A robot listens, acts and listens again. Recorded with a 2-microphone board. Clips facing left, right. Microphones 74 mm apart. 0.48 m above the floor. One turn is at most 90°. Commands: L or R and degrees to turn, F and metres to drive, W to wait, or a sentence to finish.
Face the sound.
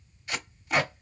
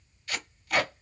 L20
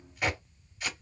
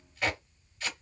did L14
L10
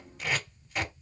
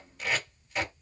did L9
Found it: tape being pulled, straight ahead.